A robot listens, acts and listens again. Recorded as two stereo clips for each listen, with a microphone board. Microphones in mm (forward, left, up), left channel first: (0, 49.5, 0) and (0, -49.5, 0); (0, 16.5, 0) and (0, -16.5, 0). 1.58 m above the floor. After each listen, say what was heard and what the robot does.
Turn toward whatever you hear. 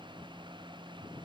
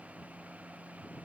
Keep listening.
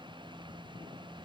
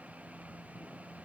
Keep listening.
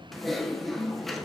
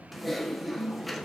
Turn 30° left.
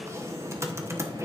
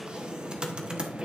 So it is at 30° right. Turn 30° right.
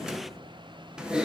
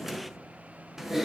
The typing on a keyboard is now 10° right. Turn 10° right.
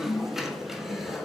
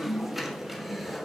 Found it: typing on a keyboard, straight ahead, 1 to 2 m away.